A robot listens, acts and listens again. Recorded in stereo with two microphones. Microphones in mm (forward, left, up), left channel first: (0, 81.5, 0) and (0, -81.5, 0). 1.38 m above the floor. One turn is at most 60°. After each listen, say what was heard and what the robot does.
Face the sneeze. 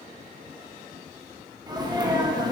The sneeze: about 25° right or 155° right. Turn 25° right.
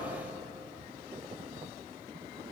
Keep listening.
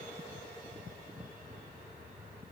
I heard a sneeze, but can't make it out now. It was about straight ahead or 130° right.